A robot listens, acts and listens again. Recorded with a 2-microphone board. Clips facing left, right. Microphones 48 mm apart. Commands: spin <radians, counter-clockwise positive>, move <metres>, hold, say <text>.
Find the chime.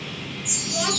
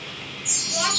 spin -0.96
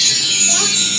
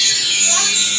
spin -0.35
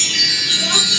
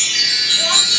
say Found it: a chime, straight ahead, 2 to 4 m away.